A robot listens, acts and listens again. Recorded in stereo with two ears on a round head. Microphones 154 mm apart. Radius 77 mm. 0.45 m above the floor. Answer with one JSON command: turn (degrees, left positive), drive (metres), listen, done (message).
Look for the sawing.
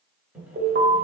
{"turn": -30}
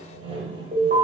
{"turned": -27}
{"turn": -145}
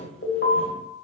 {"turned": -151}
{"done": "Facing the sawing."}